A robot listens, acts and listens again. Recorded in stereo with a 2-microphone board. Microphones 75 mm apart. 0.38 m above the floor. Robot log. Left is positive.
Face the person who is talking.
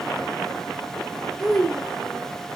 cmd yaw +30
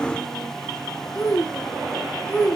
note: So it is at 145° left.
cmd yaw +145
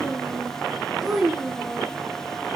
end: Facing the child speaking.